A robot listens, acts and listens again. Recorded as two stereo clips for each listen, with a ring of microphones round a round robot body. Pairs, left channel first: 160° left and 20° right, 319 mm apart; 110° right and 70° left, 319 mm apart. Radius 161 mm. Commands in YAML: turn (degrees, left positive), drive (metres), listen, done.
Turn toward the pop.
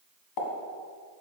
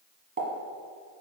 turn: 135
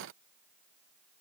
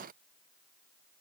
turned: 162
turn: -30
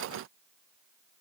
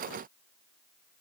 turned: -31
done: "I heard a pop from this way, but can't make it out now."